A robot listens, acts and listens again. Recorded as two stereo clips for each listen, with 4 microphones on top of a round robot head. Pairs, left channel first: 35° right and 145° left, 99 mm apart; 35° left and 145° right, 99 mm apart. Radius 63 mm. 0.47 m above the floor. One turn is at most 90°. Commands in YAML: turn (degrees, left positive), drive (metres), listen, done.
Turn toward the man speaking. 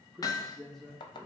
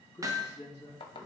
turn: 45
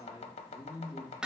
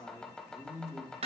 done: "Found it: a man speaking, straight ahead."